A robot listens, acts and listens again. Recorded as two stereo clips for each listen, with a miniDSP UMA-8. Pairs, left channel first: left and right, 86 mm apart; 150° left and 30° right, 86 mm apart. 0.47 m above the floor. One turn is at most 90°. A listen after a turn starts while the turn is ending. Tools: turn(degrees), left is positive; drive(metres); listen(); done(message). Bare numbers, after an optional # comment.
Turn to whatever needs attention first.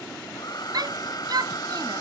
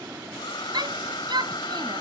# The shout: 55° right.
turn(-55)
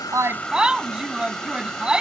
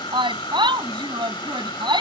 # The shout is now 10° right.
turn(-10)
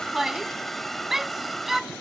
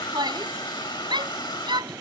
done("Found it: a shout, straight ahead.")